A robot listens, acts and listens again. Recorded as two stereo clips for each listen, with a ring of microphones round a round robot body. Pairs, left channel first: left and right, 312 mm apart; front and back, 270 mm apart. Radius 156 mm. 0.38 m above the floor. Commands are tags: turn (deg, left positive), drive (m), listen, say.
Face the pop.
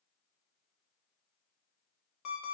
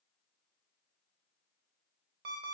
<listen/>
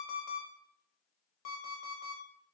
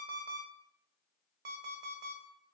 <listen/>
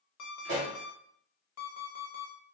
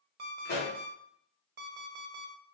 <turn deg="-65"/>
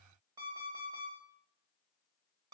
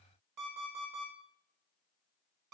<say>Facing where the pop came from. I can't hear it now.</say>